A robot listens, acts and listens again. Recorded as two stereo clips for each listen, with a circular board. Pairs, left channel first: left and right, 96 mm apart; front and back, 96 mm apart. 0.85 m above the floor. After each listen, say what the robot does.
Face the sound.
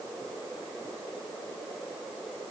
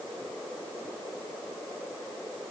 Keep listening.
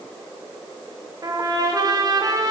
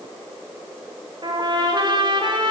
Turn 140° right.
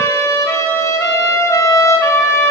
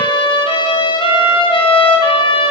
Turn 30° left.
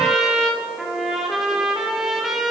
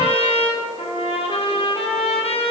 Found it: a trumpet, straight ahead.